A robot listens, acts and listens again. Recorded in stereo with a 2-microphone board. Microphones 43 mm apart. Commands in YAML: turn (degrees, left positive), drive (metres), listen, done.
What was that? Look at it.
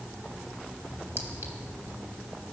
listen: true
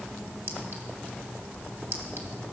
turn: -65
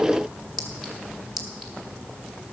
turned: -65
done: "Found it: a clink, straight ahead, 1 to 2 m away."